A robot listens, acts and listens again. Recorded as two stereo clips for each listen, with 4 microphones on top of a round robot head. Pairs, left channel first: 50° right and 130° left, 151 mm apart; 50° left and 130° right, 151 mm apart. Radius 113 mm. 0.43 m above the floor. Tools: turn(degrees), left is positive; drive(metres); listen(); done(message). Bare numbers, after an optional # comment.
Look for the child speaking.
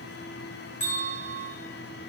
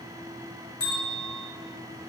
listen()
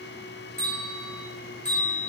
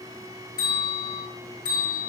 listen()
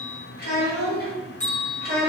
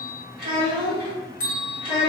# The child speaking: 65° right.
turn(-65)
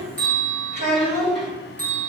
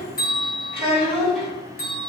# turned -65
# The child speaking is now 15° right.
turn(-15)
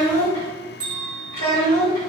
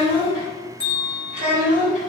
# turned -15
done("Found it: a child speaking, straight ahead, 2 to 4 m away.")